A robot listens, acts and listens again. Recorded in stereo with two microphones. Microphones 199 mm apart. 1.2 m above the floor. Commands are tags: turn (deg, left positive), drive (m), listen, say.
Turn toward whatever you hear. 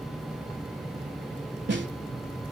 <turn deg="-65"/>
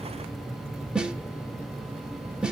<say>Found it: a snare drum, straight ahead, 1 to 2 m away.</say>